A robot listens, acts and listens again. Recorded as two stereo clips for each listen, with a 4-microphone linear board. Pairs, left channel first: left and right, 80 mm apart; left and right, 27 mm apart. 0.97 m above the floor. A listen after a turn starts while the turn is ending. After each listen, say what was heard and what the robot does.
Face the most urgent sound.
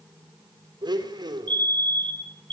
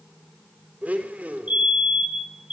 The fire alarm: about 70° right or 110° right. Turn 70° right.
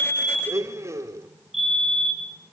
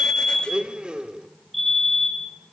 Facing the fire alarm.